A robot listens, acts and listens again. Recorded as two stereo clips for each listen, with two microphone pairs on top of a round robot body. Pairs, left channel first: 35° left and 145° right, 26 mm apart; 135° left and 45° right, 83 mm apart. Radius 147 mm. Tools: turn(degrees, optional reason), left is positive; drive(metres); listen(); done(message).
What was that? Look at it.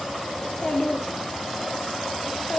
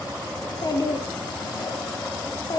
turn(degrees=95, reason="The child speaking: 95° left.")
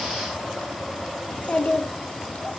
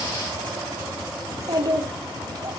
done("Facing the child speaking, 1 to 2 m away.")